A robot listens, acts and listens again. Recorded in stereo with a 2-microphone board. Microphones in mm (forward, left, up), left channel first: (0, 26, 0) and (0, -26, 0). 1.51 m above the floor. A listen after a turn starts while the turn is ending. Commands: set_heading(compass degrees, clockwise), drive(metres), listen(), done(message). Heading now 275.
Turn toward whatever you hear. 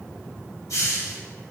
set_heading(205)
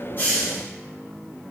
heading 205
done("Found it: a hiss, straight ahead.")